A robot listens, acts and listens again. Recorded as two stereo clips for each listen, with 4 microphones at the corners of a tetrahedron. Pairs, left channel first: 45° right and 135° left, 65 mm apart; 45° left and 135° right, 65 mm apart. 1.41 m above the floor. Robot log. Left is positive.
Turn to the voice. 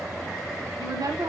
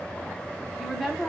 note: The woman speaking: 135° left.
cmd yaw +135
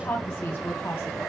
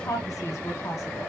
end: Found it: a woman speaking, straight ahead, under 1 m away.